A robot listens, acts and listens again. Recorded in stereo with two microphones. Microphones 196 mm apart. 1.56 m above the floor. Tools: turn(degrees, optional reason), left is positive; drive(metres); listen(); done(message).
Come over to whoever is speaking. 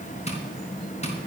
listen()
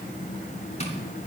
listen()
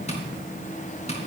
done("I can't make out anyone speaking, only tapping.")